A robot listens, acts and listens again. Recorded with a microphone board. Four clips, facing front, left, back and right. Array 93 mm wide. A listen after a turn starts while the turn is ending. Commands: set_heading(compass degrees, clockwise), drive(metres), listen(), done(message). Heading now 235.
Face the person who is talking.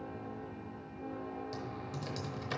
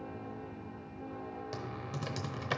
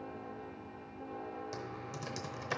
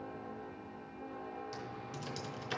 listen()
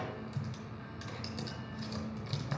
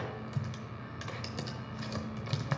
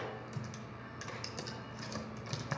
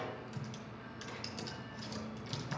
listen()
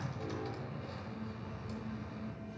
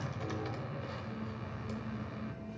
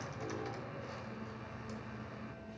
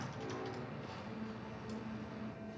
done("I can't make out anyone speaking to turn to.")